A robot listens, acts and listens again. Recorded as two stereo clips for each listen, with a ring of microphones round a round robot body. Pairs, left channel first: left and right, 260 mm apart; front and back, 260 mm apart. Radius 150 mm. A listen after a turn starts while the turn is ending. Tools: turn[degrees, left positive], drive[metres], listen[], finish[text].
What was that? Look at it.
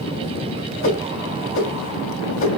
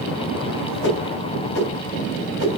Thought: The whoosh: 50° left.
Action: turn[50]
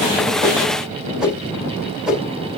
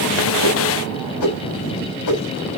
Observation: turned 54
Action: finish[Found it: a whoosh, straight ahead.]